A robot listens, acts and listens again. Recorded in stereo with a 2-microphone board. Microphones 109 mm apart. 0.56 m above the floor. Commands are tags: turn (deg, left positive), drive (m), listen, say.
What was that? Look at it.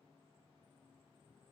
<listen/>
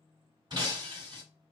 <turn deg="-45"/>
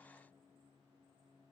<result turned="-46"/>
<listen/>
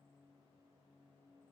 <say>I heard breaking glass, but can't make it out now. It was about 5° left or 90° right.</say>